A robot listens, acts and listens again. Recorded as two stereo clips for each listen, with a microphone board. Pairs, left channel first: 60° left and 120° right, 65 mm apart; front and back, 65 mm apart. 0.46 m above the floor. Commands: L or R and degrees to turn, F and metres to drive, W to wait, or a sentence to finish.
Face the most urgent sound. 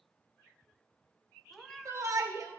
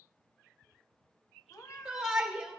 R100
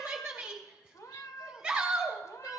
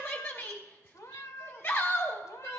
R45
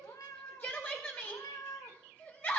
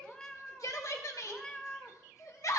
Found it: a shout, straight ahead.